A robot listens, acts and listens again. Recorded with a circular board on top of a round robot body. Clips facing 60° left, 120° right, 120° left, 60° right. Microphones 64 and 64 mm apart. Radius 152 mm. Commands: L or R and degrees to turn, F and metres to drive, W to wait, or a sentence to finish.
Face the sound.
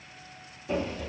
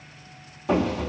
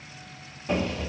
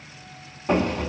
R100
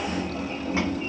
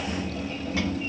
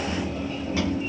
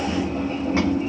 Found it: a sliding door, straight ahead.